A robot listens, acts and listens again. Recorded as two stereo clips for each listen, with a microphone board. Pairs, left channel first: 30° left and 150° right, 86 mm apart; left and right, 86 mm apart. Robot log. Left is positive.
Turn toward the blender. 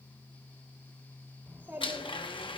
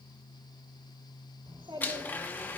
note: The blender: 20° left.
cmd yaw +20
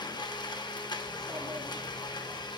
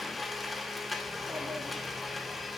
end: Facing the blender, 1 to 2 m away.